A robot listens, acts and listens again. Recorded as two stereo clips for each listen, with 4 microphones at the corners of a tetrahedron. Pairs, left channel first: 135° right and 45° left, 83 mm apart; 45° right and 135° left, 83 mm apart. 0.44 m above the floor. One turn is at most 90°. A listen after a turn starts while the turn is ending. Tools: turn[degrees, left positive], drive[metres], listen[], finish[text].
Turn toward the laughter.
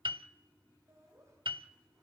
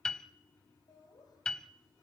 Thought: The laughter: 10° right.
Action: turn[-10]
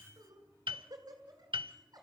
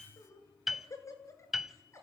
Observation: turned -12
Thought: The laughter is now 10° left.
Action: turn[10]
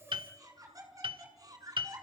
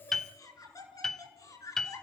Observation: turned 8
Action: finish[Facing the laughter.]